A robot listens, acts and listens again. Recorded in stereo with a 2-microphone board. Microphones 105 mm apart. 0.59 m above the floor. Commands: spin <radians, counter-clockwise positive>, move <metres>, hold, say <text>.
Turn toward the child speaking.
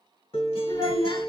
spin 0.79
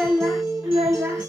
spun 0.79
spin -0.17
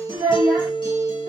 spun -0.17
spin -0.26
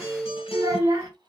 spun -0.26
spin -0.44
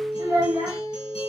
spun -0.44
spin -0.52
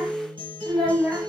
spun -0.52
say Found it: a child speaking, straight ahead, 1 to 2 m away.